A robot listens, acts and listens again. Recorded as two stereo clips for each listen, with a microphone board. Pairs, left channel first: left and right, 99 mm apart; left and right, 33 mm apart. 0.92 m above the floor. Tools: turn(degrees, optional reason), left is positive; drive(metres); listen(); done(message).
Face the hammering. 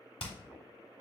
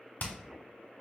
turn(degrees=70, reason="The hammering: about 70° left or 110° left.")
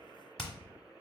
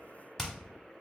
done("Facing the hammering, 1 to 2 m away.")